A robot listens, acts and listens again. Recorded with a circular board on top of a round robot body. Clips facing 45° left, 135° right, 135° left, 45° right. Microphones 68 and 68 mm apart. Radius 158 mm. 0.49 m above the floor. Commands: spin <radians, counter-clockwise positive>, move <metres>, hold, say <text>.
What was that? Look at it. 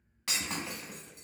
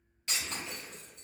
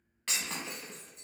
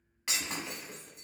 spin 0.61
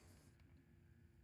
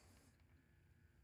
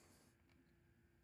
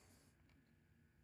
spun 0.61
say I heard breaking glass from this way, but can't make it out now.